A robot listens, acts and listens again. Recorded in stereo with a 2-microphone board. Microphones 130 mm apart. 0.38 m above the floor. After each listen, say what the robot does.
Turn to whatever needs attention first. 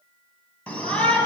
Turn 30° left.
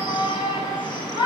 Turn 140° left.
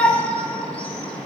Turn 10° left.
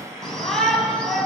Found it: a shout, straight ahead.